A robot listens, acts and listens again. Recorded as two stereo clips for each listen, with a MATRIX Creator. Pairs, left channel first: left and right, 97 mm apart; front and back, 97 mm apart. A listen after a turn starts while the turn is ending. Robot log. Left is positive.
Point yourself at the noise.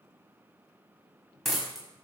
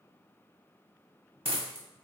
note: The dropped coin: straight behind.
cmd yaw +180
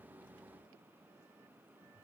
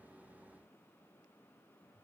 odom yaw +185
end: I heard a dropped coin from this way, but can't make it out now.